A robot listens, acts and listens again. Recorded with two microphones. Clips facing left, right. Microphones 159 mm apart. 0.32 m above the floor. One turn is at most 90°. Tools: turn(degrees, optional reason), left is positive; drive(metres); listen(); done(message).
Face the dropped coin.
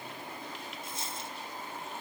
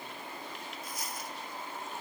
turn(degrees=25, reason="The dropped coin: about 25° left or 155° left.")
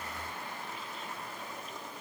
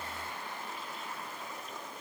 listen()
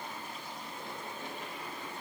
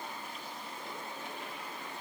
done("I heard a dropped coin, but can't make it out now. It was about straight ahead or 130° left.")